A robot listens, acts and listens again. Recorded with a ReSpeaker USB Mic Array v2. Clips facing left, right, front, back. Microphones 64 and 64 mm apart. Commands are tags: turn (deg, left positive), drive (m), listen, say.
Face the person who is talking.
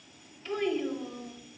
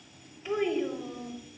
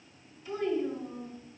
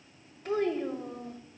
<turn deg="-165"/>
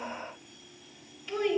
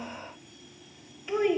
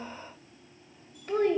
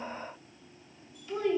<turn deg="-25"/>
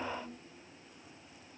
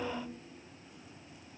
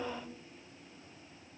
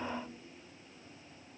<turn deg="-25"/>
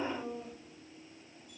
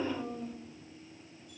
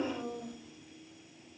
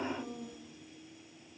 <say>Found it: a child speaking, straight ahead, 1 to 2 m away.</say>